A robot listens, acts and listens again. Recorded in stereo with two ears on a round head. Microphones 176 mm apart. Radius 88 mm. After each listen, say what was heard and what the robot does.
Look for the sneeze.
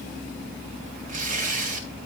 Keep listening.
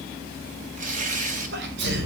The sneeze: about 60° right or 120° right. Turn 60° right.
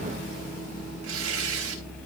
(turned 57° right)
Keep listening.
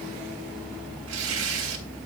I heard a sneeze, but can't make it out now. It was about 5° right or 65° right.